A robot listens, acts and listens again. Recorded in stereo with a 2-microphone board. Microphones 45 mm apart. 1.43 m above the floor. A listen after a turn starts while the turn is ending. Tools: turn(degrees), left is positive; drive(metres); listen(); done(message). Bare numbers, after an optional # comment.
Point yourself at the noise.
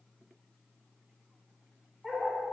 turn(-30)
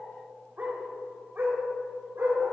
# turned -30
# So it is at 125° right.
turn(-125)
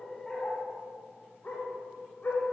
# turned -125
# The dog barking is now 50° left.
turn(50)
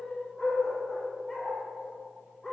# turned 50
# The dog barking is now 10° left.
turn(10)
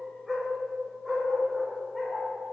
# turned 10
done("Found it: a dog barking, straight ahead.")